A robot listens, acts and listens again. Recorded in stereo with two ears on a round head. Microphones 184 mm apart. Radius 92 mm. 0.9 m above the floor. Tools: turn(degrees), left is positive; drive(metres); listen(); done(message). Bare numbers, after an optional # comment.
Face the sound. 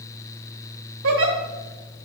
# The giggle: about 65° right or 115° right.
turn(-65)
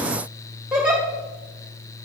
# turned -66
done("Facing the giggle.")